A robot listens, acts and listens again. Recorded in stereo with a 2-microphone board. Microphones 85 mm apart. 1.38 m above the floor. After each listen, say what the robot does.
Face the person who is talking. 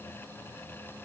Keep listening.
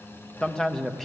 Turn 30° left.
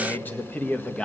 Turn 30° left.
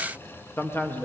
Turn 155° left.
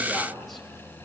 Keep listening.
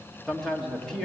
Found it: a man speaking, straight ahead, 2 to 4 m away.